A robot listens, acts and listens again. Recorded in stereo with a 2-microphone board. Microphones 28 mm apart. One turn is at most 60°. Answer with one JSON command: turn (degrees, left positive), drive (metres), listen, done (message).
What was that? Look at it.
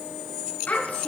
{"turn": 60}
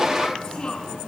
{"turn": 35}
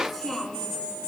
{"done": "Found it: a child speaking, straight ahead."}